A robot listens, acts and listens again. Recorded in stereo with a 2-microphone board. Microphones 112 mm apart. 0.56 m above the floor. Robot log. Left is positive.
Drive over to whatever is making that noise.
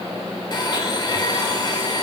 note: The blender: about 40° left or 140° left.
cmd yaw +40
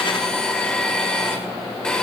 note: So it is at 10° left.
cmd yaw +10
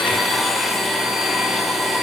cmd fwd 1.0
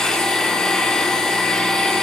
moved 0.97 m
note: The blender is now 10° left.
cmd yaw +10
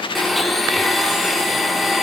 cmd fwd 1.0
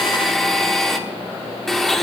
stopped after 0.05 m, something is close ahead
end: I am next to the blender.